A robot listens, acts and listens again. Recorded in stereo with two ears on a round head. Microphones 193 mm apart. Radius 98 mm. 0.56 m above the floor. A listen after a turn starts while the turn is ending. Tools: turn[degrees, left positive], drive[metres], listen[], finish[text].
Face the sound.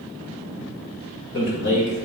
Thought: The man speaking: about 55° left or 125° left.
Action: turn[55]
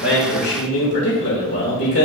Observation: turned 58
Thought: So it is at 60° left.
Action: turn[60]
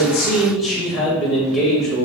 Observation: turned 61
Action: finish[Found it: a man speaking, straight ahead, 2 to 4 m away.]